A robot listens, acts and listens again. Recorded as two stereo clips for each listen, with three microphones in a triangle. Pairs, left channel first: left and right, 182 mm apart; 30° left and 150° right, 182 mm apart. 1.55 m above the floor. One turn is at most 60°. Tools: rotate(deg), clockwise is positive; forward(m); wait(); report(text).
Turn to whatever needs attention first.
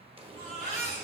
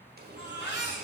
rotate(-35)
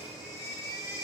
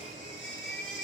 rotate(-20)
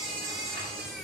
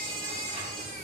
report("Found it: a baby crying, straight ahead, 2 to 4 m away.")